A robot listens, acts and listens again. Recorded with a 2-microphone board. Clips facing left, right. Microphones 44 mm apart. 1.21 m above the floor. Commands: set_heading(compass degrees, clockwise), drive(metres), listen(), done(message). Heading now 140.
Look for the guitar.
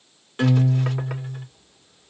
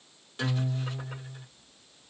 set_heading(110)
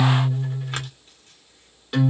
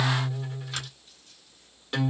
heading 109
done("Found it: a guitar, straight ahead.")